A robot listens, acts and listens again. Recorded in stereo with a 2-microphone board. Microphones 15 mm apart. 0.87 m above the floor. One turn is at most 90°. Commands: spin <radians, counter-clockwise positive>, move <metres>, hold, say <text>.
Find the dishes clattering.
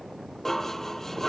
spin 0.35
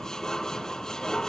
spin 1.57
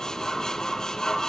spin 0.79
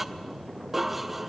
spin -0.26
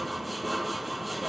say Facing the dishes clattering, under 1 m away.